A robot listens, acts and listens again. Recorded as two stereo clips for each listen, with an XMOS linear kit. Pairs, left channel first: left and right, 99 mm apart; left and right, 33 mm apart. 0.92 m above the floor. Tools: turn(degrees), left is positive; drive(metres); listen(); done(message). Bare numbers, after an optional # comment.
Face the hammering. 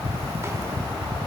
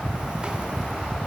listen()
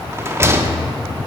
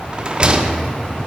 listen()
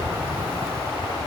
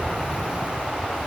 done("I can't make out hammering, only a rattle.")